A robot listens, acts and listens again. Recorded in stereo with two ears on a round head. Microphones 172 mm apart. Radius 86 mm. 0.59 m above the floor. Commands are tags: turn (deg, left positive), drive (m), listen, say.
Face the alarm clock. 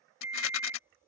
<turn deg="-30"/>
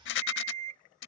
<turn deg="-135"/>
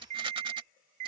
<turn deg="-40"/>
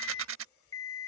<turn deg="15"/>
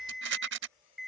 <say>Found it: an alarm clock, straight ahead.</say>